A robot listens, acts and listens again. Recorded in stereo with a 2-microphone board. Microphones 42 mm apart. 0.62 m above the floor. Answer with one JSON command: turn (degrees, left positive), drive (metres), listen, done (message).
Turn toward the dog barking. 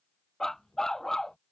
{"turn": 30}
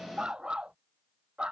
{"turn": -25}
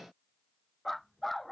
{"done": "Found it: a dog barking, straight ahead."}